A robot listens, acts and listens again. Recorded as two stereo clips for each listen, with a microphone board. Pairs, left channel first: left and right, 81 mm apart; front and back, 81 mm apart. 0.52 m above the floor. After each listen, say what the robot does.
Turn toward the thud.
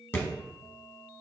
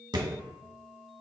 Turn 155° left.
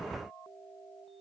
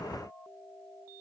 Facing where the thud came from. I can't hear it now.